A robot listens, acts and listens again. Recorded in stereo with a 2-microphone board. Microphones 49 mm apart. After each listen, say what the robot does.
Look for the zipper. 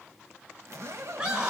Turn 65° right.
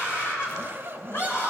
Turn 45° right.
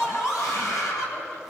Keep listening.
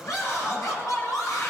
Keep listening.
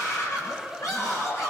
Facing where the zipper came from. I can't hear it now.